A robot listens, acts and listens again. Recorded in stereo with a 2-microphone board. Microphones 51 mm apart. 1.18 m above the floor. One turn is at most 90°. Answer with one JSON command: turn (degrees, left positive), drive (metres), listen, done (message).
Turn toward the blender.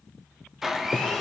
{"turn": -30}
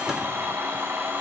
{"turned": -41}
{"turn": -90}
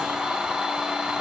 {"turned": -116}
{"turn": -15}
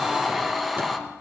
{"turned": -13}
{"done": "Found it: a blender, straight ahead."}